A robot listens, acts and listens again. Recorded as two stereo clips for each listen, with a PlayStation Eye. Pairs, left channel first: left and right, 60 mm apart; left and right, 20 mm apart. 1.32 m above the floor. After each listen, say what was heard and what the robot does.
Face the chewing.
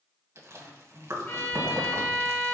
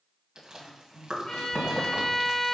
The chewing: about 55° right or 125° right. Turn 55° right.
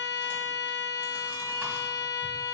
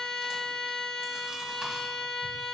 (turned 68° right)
Keep listening.
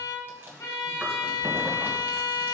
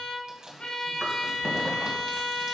So it is at 45° right. Turn 45° right.
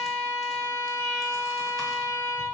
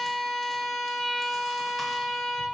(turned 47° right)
Keep listening.
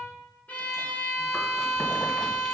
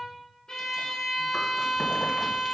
Keep listening.
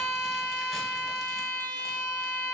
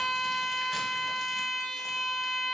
I heard chewing from this way, but can't make it out now.